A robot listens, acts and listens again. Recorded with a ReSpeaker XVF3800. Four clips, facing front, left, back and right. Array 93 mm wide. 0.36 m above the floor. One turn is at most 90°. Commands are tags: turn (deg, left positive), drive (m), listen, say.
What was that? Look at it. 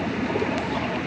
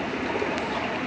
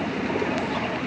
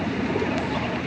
<listen/>
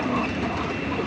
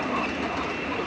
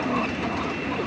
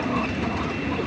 <listen/>
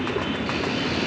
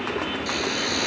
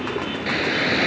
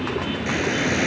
<turn deg="-90"/>
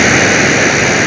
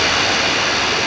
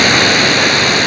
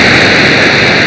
<turn deg="-65"/>
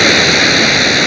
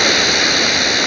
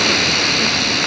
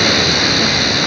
<say>Found it: a hiss, straight ahead, 1 to 2 m away.</say>